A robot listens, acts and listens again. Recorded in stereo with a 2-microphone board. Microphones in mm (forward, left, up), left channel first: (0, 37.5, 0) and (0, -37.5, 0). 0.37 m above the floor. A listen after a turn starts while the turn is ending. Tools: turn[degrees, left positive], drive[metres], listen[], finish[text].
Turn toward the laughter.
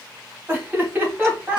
Thought: The laughter: about 20° right or 160° right.
Action: turn[-20]
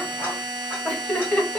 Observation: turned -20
Thought: So it is at 20° left.
Action: turn[20]
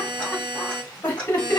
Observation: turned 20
Thought: The laughter is now 25° left.
Action: turn[25]
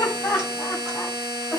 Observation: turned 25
Thought: The laughter is now 20° left.
Action: turn[20]
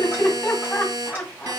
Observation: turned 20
Thought: The laughter is now 10° left.
Action: turn[10]
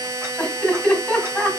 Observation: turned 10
Action: finish[Facing the laughter.]